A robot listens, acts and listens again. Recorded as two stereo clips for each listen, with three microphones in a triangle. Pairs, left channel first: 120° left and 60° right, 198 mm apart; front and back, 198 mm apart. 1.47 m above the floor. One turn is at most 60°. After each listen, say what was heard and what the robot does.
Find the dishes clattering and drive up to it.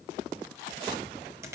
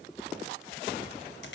Keep listening.
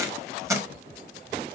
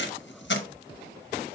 Keep listening.
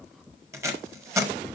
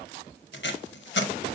I can't make out dishes clattering to turn to.